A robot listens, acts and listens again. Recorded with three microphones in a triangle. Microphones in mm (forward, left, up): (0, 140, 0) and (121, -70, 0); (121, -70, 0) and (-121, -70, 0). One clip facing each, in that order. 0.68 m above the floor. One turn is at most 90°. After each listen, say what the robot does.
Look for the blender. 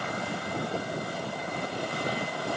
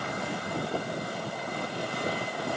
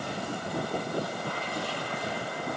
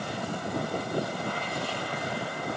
Keep listening.
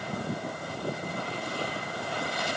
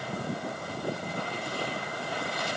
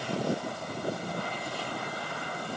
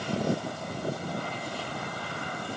Keep listening.
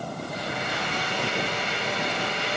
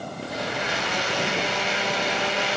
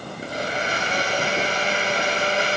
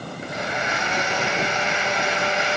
Turn 55° right.
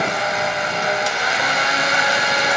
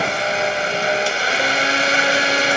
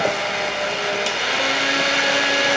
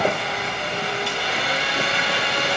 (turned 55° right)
Facing the blender.